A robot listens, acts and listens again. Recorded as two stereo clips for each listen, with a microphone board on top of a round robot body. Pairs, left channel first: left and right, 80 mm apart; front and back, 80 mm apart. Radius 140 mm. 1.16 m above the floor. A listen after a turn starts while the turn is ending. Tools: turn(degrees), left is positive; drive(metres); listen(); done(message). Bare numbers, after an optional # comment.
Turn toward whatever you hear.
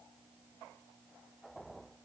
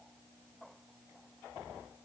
listen()
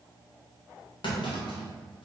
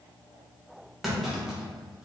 # The clunk: 95° left.
turn(95)
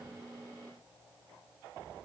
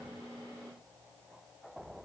done("Facing where the clunk came from. I can't hear it now.")